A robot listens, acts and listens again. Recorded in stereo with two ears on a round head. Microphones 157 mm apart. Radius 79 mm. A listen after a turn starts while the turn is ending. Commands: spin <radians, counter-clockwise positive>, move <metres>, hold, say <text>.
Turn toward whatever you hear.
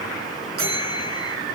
spin -1.05
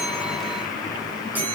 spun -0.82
spin -0.17
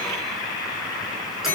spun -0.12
say Facing the bell, over 4 m away.